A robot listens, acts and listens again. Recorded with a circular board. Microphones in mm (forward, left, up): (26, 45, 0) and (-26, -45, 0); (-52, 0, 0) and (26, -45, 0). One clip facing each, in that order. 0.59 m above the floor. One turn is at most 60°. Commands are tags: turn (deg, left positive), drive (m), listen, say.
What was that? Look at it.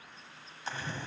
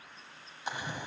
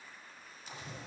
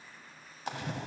<turn deg="-45"/>
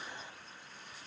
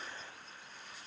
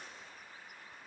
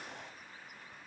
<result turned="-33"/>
<turn deg="-10"/>
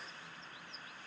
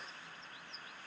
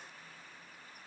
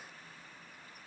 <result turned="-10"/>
<say>I heard a splash from this way, but can't make it out now.</say>